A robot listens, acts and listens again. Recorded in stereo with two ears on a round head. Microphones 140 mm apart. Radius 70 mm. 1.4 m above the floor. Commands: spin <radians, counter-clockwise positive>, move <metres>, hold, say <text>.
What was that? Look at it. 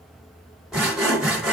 spin -0.52
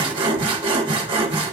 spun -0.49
spin -2.62
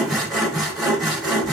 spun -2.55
say Found it: sawing, straight ahead, 1 to 2 m away.